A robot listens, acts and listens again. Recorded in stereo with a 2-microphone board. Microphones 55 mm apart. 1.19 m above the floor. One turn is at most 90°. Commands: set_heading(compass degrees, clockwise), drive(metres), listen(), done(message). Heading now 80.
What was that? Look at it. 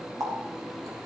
set_heading(155)
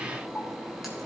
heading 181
done("Facing the running tap, 2 to 4 m away.")